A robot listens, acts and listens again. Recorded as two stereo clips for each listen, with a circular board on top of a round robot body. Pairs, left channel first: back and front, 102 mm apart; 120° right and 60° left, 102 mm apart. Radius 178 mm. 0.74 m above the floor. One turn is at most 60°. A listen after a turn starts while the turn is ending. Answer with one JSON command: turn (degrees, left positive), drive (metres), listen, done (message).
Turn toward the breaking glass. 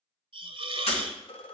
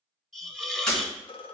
{"turn": 60}
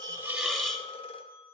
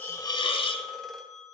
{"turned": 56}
{"turn": 60}
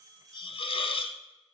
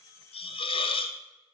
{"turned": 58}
{"turn": 45}
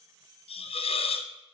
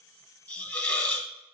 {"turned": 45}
{"done": "Facing where the breaking glass came from. I can't hear it now."}